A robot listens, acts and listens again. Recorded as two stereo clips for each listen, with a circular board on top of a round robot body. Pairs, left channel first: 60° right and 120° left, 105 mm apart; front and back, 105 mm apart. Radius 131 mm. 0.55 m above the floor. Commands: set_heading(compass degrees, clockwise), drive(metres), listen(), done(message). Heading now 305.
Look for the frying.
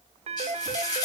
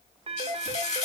done("Found it: frying, straight ahead.")